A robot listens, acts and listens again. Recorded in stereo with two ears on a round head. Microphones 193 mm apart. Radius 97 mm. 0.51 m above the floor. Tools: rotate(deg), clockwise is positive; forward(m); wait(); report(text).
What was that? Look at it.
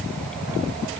wait()
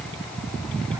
wait()
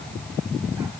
report("I can't make out anything to turn to.")